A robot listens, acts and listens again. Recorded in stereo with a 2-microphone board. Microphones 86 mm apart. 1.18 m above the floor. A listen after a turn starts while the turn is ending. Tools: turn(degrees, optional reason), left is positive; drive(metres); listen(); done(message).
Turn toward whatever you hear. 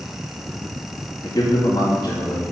turn(degrees=50, reason="The man speaking: about 50° left or 130° left.")
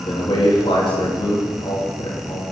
turn(degrees=80, reason="So it is at 80° left.")
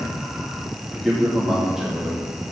done("Found it: a man speaking, straight ahead, 2 to 4 m away.")